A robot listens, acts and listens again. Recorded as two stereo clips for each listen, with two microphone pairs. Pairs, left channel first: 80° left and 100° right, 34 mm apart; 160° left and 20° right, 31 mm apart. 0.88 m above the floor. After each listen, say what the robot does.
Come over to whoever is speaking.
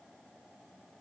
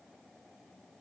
Keep listening.
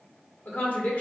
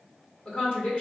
Turn 115° left.
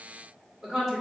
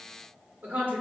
Turn 20° right.
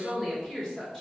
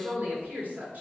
Turn 10° left.
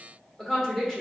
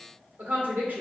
Drive 1.0 m forward.
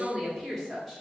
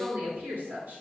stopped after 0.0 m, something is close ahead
Something is in my way. I am facing the woman speaking but have not reached it.